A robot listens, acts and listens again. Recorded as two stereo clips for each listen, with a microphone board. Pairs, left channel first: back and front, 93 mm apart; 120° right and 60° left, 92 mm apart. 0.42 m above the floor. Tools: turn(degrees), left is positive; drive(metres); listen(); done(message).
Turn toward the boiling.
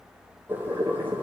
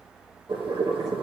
turn(degrees=65)
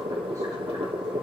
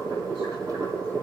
turn(degrees=10)
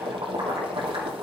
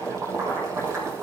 done("Facing the boiling.")